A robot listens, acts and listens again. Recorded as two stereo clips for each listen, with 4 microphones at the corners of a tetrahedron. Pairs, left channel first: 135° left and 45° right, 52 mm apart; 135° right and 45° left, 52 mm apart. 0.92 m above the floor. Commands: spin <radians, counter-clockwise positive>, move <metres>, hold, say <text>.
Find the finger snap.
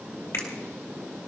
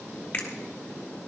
spin 2.79
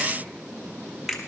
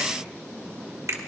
spin 0.70
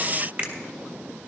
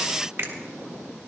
say Facing the finger snap, 1 to 2 m away.